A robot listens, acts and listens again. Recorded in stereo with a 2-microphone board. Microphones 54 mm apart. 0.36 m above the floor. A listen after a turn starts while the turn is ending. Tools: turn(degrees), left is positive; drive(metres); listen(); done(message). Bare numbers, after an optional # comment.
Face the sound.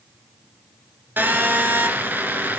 # The phone buzzing: about 35° right or 145° right.
turn(-35)
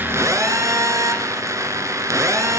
# So it is at 110° right.
turn(-110)
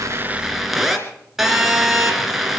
done("Found it: a phone buzzing, straight ahead, 2 to 4 m away.")